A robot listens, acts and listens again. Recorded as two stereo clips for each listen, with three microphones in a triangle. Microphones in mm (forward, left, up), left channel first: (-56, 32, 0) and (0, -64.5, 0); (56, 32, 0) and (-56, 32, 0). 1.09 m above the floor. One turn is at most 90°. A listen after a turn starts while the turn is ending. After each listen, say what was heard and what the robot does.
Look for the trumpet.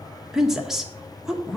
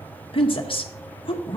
Keep listening.
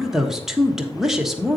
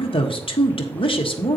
Keep listening.
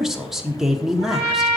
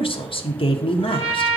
The trumpet: 160° right. Turn 90° right.
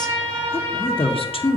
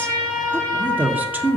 The trumpet is now 80° right. Turn 80° right.
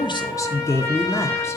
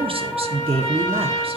Facing the trumpet.